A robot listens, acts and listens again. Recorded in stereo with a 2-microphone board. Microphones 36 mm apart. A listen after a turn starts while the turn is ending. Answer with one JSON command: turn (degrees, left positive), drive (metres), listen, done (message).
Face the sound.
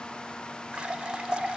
{"turn": -30}
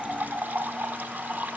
{"turn": -120}
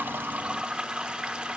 {"turn": -30}
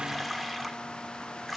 {"done": "Found it: a running tap, straight ahead."}